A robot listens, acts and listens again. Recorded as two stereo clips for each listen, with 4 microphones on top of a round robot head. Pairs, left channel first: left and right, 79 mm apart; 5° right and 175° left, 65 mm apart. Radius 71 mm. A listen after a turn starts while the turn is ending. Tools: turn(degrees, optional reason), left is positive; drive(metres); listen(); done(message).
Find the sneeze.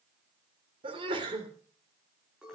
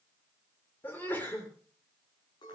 turn(degrees=-70, reason="The sneeze: 70° right.")
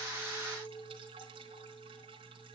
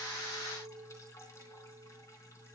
done("I heard a sneeze from this way, but can't make it out now.")